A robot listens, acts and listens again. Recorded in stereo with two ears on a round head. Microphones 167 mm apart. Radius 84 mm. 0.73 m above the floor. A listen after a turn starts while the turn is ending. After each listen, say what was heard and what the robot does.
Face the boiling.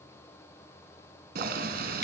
The boiling: about 50° right or 130° right. Turn 50° right.
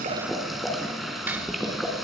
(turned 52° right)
Found it: boiling, straight ahead.